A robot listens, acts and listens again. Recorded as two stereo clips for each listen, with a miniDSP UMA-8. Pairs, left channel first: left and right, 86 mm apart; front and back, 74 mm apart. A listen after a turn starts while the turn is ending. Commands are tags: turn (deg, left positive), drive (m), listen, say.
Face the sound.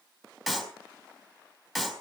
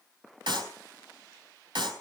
<turn deg="180"/>
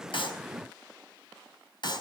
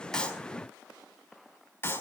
<turn deg="60"/>
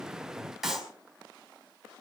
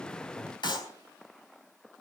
<say>Facing the clap.</say>